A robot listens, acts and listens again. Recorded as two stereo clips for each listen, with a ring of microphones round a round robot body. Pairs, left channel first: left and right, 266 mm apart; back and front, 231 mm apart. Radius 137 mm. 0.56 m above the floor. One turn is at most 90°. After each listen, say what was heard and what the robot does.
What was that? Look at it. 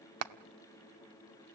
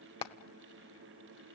The hammering: 110° right. Turn 90° right.
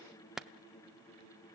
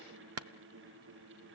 Facing the hammering.